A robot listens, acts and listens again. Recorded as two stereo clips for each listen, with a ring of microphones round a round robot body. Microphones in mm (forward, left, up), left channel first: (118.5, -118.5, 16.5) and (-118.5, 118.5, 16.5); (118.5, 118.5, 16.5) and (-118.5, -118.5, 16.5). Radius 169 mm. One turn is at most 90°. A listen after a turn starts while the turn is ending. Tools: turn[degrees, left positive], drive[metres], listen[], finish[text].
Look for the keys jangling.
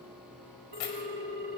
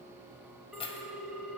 Thought: The keys jangling: 30° right.
Action: turn[-30]
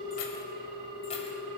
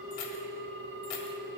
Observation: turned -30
Action: listen[]
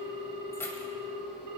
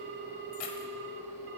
Thought: The keys jangling is now 40° left.
Action: turn[40]
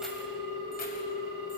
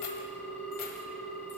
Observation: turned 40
Action: listen[]
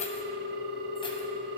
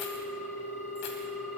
Action: listen[]
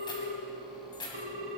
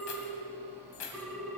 Thought: The keys jangling is now 30° left.
Action: turn[30]
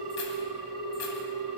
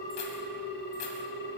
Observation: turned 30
Action: listen[]
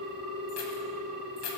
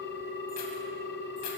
Action: finish[Found it: keys jangling, straight ahead, 2 to 4 m away.]